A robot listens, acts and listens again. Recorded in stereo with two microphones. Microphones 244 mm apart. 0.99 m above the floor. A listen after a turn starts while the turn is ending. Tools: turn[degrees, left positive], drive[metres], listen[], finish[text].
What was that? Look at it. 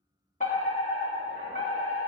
Thought: The fire alarm: about 30° left or 150° left.
Action: turn[30]
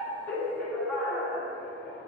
Action: finish[Facing the fire alarm.]